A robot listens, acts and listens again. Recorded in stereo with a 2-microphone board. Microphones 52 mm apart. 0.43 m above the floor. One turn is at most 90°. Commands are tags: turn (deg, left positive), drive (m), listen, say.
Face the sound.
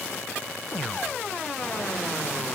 <listen/>
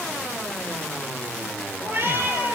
<turn deg="-50"/>
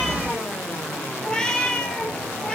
<turn deg="15"/>
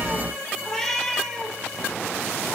<say>Found it: a cat meowing, straight ahead.</say>